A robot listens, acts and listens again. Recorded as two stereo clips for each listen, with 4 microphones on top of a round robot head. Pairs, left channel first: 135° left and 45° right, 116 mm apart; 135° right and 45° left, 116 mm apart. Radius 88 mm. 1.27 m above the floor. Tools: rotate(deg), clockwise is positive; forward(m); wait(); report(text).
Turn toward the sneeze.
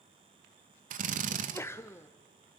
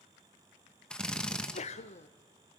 rotate(160)
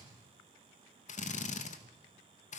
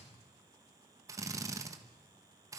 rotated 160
report("Facing where the sneeze came from. I can't hear it now.")